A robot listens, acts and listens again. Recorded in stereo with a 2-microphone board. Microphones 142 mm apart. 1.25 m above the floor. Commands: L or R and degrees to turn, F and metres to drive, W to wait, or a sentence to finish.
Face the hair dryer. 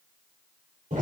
W
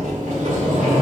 W
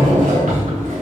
I can't make out a hair dryer to turn to.